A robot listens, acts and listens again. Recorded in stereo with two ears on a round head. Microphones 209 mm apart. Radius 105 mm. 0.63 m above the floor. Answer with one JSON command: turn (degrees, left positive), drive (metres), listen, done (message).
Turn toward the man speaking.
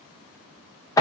{"listen": true}
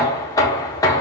{"listen": true}
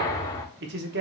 {"turn": -50}
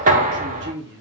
{"turn": -65}
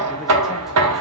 {"listen": true}
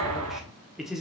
{"done": "Facing the man speaking, under 1 m away."}